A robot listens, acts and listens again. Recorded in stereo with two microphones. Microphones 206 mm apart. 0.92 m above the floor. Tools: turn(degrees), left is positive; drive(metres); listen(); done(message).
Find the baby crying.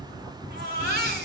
turn(degrees=-50)
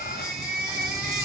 done("Facing the baby crying.")